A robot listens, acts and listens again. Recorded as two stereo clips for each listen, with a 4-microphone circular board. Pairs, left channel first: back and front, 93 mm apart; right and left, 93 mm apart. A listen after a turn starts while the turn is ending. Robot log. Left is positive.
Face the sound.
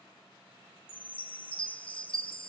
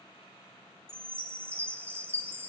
note: The chime: 155° left.
cmd yaw +155
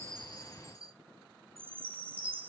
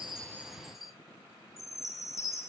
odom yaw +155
end: Facing the chime, 1 to 2 m away.